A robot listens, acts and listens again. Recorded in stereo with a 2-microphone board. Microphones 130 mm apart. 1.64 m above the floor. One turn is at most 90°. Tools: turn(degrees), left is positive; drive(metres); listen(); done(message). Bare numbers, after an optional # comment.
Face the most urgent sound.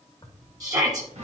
# The shout: about 25° right or 155° right.
turn(-25)
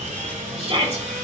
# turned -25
# So it is at 130° right.
turn(-90)
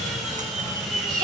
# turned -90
# The shout is now 35° right.
turn(-35)
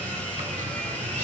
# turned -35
listen()
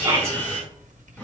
# The shout is now 20° right.
turn(-20)
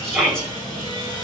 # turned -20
done("Facing the shout, 2 to 4 m away.")